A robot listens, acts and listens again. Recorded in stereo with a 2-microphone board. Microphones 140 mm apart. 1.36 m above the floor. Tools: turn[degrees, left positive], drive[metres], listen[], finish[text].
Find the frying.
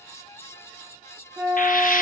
Thought: The frying: about 75° left or 105° left.
Action: turn[75]
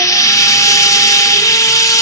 Thought: So it is at 25° left.
Action: turn[25]
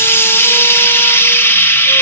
Thought: The frying is now 15° left.
Action: turn[15]
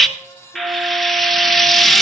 Action: finish[Found it: frying, straight ahead.]